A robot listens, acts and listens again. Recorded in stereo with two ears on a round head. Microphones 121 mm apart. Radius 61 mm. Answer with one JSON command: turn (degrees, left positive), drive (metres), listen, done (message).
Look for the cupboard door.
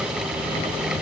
{"listen": true}
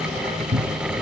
{"turn": -45}
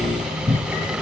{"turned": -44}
{"done": "Facing the cupboard door."}